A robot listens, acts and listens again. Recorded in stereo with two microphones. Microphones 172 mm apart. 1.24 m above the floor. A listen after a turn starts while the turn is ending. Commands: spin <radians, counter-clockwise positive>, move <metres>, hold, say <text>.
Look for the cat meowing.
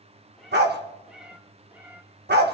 spin -0.52
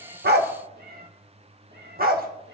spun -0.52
spin -2.01
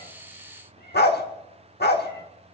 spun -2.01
hold
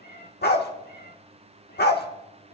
spin 1.13
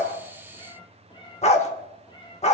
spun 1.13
spin 0.44
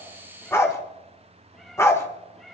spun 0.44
say Facing the cat meowing.